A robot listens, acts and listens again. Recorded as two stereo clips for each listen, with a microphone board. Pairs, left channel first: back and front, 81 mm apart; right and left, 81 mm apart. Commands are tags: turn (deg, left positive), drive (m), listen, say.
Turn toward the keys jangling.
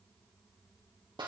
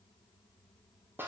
<listen/>
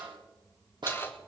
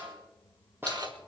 <turn deg="120"/>
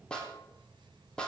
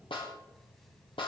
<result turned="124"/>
<listen/>
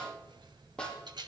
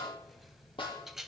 <say>Found it: keys jangling, straight ahead.</say>